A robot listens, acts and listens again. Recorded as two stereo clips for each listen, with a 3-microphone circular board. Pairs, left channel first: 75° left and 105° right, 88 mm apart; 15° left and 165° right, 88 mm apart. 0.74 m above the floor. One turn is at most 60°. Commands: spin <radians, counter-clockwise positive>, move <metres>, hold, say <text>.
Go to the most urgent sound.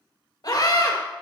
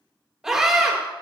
spin 1.05
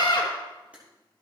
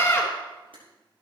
spin 1.05
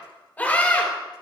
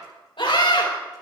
move 1.0
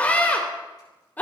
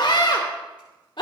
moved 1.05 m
move 1.0
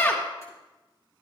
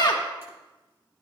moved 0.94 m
spin 0.35
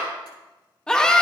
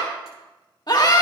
move 1.0
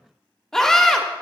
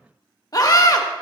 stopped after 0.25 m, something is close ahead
say I am next to the scream.